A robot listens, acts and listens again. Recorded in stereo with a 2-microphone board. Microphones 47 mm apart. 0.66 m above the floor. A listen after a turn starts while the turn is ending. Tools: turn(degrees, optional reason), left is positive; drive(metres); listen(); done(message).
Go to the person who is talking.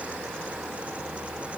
listen()
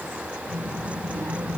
turn(degrees=-75, reason="The child speaking: about 75° right or 105° right.")
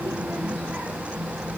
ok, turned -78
turn(degrees=-30, reason="So it is at 30° right.")
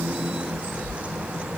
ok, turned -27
drive(metres=1.0)
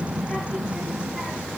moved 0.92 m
drive(metres=1.0)
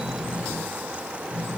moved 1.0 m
drive(metres=1.0)
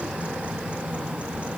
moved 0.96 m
drive(metres=1.0)
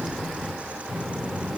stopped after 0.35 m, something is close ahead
done("Arrived at the child speaking, straight ahead.")